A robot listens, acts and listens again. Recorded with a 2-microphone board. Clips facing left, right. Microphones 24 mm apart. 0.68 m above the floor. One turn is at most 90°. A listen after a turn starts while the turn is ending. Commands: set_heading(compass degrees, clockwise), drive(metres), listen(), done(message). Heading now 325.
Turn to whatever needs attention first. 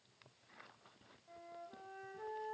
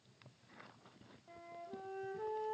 listen()
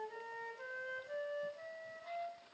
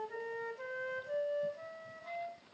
listen()
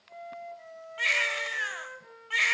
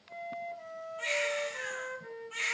set_heading(235)
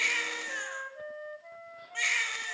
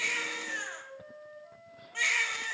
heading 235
done("Found it: a baby crying, straight ahead.")